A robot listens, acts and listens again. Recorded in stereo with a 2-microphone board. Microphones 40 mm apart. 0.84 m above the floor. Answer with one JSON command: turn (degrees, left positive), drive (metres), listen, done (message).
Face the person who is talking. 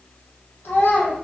{"turn": 75}
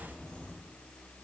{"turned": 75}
{"listen": true}
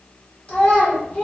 {"turn": 30}
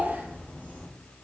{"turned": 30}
{"listen": true}
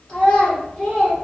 {"turn": 20}
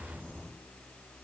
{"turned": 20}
{"listen": true}
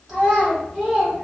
{"done": "Facing the child speaking, 1 to 2 m away."}